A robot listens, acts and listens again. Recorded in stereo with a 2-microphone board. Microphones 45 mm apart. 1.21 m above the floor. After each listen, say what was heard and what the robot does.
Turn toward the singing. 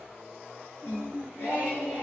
Turn 90° left.
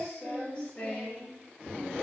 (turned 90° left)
So it is at 40° left. Turn 40° left.
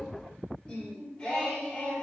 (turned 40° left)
The singing is now 20° left. Turn 20° left.
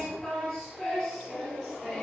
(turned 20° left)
Facing the singing.